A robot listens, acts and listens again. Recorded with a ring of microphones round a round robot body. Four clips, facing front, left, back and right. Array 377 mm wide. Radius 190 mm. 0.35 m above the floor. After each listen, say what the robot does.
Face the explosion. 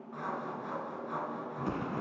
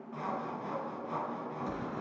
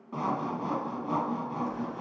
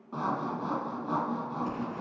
Turn 10° right.
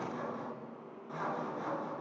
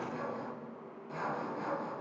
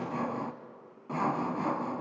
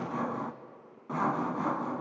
Facing where the explosion came from. I can't hear it now.